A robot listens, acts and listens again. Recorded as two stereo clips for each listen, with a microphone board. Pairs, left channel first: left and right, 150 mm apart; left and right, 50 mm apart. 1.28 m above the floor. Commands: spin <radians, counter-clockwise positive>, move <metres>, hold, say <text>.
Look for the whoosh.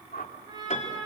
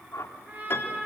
spin 1.57
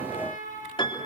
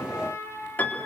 hold
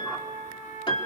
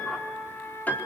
hold
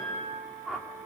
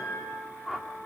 say Facing the whoosh, 2 to 4 m away.